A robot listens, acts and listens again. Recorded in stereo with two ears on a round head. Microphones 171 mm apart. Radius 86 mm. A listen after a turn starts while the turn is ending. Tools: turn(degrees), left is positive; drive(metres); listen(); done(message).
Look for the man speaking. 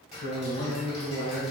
turn(degrees=65)
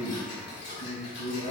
turn(degrees=45)
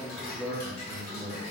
turn(degrees=10)
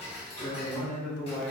done("Found it: a man speaking, straight ahead, over 4 m away.")